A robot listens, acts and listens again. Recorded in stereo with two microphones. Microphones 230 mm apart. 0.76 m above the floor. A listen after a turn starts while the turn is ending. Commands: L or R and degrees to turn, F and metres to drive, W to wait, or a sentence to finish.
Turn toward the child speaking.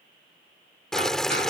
W
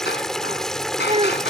R25
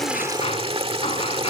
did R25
W
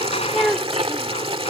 Found it: a child speaking, straight ahead.